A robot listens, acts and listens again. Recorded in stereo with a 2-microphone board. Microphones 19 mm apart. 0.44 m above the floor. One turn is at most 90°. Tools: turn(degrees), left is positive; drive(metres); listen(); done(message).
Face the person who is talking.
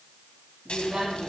turn(degrees=-70)
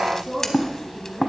turn(degrees=-35)
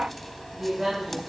turn(degrees=-25)
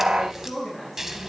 done("Found it: a woman speaking, straight ahead, over 4 m away.")